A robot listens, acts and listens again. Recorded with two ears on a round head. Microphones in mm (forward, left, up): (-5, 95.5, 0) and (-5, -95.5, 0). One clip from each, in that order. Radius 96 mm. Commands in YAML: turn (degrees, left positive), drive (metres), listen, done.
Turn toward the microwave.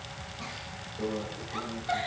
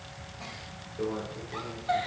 turn: -65
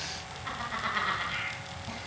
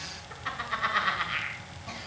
listen: true
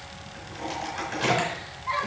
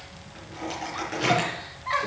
done: "Facing the microwave, over 4 m away."